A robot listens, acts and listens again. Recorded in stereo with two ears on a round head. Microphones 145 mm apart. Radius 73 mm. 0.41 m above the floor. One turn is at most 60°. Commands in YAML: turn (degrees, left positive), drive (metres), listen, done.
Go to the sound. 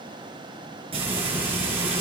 turn: -40
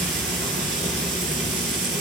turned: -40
turn: -60
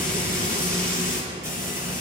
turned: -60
turn: -15
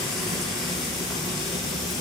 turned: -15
drive: 1.0
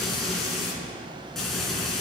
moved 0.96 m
drive: 1.0
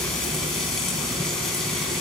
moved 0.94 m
drive: 1.0
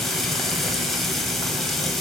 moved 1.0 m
drive: 1.0
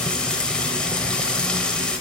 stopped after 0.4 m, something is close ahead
turn: 10
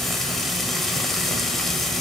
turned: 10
done: "Arrived at the frying, straight ahead."